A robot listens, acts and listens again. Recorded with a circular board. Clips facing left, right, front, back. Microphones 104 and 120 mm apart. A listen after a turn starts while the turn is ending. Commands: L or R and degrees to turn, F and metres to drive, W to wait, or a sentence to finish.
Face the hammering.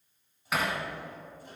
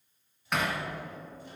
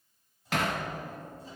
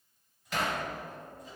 Facing the hammering.